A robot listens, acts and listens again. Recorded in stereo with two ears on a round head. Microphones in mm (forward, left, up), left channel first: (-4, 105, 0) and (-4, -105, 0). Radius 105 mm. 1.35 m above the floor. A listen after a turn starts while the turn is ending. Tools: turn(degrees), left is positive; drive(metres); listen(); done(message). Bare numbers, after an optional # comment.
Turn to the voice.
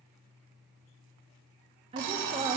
# The woman speaking: about 25° right or 155° right.
turn(-25)
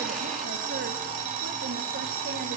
listen()
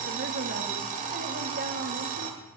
listen()
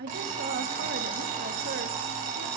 # So it is at 135° right.
turn(-135)
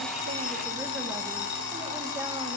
listen()
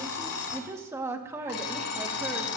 # The woman speaking is now 10° right.
turn(-10)
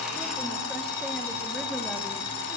listen()
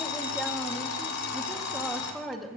done("Found it: a woman speaking, straight ahead, 1 to 2 m away.")